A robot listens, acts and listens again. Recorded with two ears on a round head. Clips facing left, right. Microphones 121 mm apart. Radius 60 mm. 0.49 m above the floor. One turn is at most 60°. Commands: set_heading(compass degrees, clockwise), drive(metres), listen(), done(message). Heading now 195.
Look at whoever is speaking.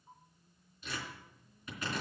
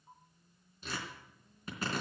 listen()
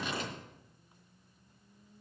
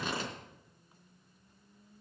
listen()
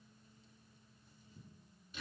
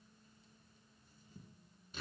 done("I can't make out anyone speaking to turn to.")